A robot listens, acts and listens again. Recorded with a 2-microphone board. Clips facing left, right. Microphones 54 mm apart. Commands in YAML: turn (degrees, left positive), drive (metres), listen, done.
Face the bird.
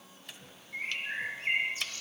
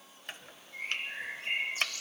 turn: 40
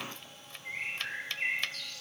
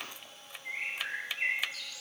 done: "Facing the bird."